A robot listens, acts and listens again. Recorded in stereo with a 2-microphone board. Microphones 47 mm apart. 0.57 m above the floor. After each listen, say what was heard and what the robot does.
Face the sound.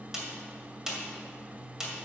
Turn 30° right.
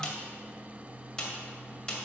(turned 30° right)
So it is at 20° left. Turn 20° left.
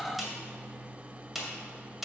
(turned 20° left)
Found it: a snare drum, straight ahead, 1 to 2 m away.